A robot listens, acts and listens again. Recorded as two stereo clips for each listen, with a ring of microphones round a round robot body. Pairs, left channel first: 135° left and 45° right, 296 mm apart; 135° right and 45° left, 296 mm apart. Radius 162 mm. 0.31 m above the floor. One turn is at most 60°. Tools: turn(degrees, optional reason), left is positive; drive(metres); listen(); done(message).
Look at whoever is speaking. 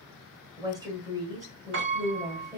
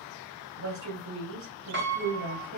turn(degrees=30, reason="The woman speaking: 30° left.")
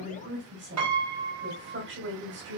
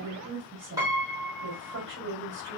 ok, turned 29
done("Facing the woman speaking, 2 to 4 m away.")